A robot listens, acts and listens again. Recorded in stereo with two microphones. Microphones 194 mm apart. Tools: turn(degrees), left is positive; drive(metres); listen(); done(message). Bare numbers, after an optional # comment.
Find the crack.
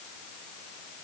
listen()
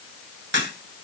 # The crack: about 65° right or 115° right.
turn(-65)
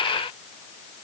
listen()
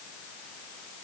done("I heard a crack, but can't make it out now. It was about straight ahead or 50° right.")